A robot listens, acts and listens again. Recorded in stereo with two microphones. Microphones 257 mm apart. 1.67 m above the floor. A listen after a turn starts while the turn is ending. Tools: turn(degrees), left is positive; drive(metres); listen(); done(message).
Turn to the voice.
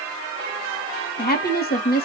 turn(degrees=35)
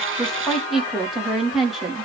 done("Found it: a woman speaking, straight ahead.")